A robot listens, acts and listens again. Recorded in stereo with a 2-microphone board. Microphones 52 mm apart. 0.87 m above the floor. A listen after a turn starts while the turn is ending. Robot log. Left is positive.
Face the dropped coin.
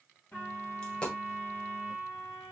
note: The dropped coin: about 20° left or 160° left.
cmd yaw +20
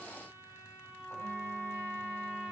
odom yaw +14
cmd idle
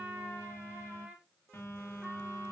end: I heard a dropped coin, but can't make it out now. It was about 5° left or 145° left.